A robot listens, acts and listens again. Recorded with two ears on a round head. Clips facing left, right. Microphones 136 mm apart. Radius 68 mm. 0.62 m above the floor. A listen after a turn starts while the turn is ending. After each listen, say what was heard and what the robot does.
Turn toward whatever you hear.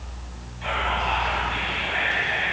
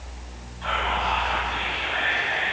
The whispering: about 15° left or 165° left. Turn 15° left.
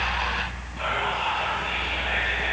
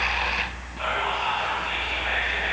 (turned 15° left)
Found it: whispering, straight ahead.